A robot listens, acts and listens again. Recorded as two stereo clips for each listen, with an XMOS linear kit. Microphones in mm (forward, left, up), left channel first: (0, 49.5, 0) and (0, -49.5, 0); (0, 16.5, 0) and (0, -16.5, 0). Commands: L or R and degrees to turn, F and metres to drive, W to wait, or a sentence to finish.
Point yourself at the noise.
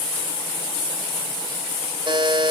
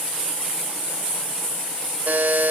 R50
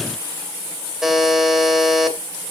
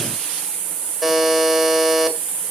Found it: a buzzer, straight ahead, 2 to 4 m away.